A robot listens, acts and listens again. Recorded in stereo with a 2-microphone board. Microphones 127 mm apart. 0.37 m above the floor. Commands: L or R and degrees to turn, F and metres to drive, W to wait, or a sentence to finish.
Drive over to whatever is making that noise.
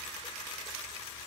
W
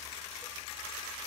W
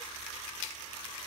I can't make out anything to turn to.